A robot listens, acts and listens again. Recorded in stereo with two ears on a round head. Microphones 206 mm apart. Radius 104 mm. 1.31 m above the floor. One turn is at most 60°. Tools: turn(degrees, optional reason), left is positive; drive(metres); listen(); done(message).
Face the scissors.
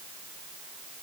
listen()
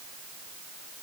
listen()
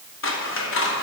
turn(degrees=60, reason="The scissors: about 60° left or 120° left.")
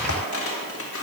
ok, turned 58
turn(degrees=60, reason="So it is at 60° left.")
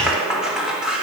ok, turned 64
done("Facing the scissors.")